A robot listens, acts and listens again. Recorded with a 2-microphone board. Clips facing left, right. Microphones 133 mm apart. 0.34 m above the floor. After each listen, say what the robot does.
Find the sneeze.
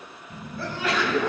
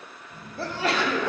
Turn 35° right.
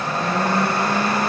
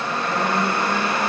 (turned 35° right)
Keep listening.
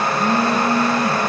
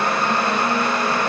I heard a sneeze, but can't make it out now. It was about straight ahead or 110° right.